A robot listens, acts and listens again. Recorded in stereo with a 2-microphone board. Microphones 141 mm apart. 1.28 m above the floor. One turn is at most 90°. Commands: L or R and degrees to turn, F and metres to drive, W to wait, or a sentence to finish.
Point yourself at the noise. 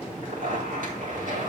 R70
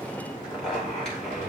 Facing the zipper.